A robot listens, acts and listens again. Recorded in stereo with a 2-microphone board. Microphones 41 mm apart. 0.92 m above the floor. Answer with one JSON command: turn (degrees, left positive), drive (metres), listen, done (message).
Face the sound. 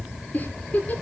{"turn": 45}
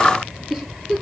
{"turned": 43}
{"done": "Facing the giggle."}